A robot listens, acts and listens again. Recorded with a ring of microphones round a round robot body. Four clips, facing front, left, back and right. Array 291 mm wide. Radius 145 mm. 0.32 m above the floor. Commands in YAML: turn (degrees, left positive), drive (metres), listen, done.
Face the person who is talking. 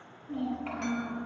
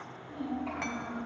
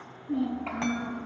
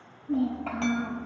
turn: -105
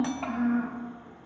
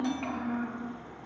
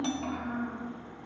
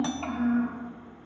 turn: -15
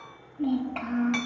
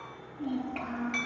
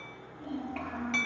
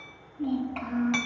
done: "Found it: a child speaking, straight ahead, over 4 m away."